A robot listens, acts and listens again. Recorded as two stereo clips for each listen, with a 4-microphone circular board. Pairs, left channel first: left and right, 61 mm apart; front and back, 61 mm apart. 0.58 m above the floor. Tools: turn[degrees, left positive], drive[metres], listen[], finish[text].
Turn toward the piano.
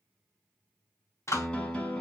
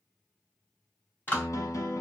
Thought: The piano: 20° left.
Action: turn[20]
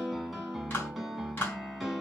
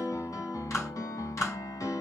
Action: finish[Facing the piano.]